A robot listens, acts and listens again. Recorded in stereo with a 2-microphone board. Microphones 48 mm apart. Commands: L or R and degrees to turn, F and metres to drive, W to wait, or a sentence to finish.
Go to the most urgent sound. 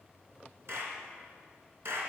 W
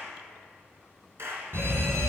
R55
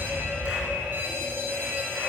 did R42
R55
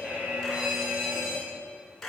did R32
R25
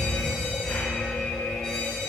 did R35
L10
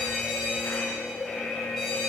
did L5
F1.0
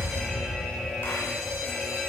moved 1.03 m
F1.0
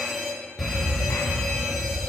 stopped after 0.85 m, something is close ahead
Arrived at the fire alarm, straight ahead.